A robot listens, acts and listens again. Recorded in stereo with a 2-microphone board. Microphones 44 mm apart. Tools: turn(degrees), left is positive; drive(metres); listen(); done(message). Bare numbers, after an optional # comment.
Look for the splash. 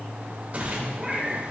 # The splash: about 35° right or 145° right.
turn(-35)
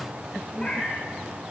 listen()
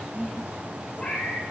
done("I heard a splash, but can't make it out now. It was about straight ahead or 110° right.")